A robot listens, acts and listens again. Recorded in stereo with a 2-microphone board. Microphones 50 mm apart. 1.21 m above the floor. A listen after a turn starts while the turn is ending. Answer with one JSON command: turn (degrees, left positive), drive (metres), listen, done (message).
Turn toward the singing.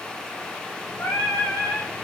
{"turn": 65}
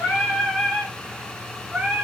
{"turn": -30}
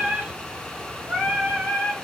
{"turn": -35}
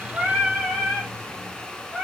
{"done": "Found it: singing, straight ahead, 2 to 4 m away."}